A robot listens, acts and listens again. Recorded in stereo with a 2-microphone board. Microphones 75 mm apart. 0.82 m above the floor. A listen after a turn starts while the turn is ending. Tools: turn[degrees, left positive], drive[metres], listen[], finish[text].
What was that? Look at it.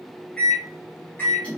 Thought: The microwave: about 20° left or 160° left.
Action: turn[20]
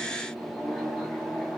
Action: finish[Facing the microwave, 1 to 2 m away.]